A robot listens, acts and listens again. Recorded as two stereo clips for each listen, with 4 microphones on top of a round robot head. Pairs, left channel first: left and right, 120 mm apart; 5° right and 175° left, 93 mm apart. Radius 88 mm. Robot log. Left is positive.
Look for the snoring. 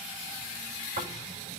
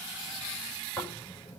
note: The snoring: 80° right.
cmd yaw -80
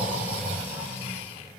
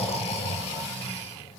note: The snoring is now 10° right.
cmd yaw -10
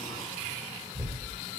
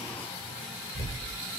end: Found it: snoring, straight ahead, over 4 m away.